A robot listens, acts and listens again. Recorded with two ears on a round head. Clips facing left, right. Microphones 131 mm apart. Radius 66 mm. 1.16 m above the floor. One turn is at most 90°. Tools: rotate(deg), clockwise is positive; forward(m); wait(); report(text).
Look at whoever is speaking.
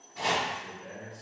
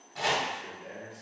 rotate(30)
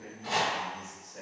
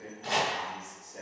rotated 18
rotate(90)
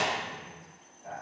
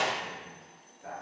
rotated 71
rotate(75)
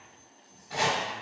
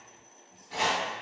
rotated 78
wait()
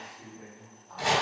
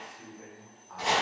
report("Found it: a man speaking, straight ahead, 1 to 2 m away.")